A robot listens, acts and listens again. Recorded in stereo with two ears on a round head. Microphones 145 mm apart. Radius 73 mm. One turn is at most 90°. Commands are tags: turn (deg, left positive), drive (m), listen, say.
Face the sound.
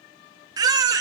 <turn deg="-25"/>
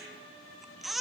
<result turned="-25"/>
<say>Facing the baby crying.</say>